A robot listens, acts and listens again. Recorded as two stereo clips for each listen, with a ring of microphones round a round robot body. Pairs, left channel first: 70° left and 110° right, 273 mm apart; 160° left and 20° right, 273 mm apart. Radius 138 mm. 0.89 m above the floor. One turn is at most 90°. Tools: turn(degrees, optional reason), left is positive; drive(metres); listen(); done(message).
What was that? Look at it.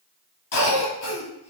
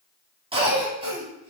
turn(degrees=45, reason="The cough: 45° left.")
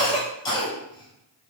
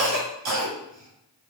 done("Found it: a cough, straight ahead.")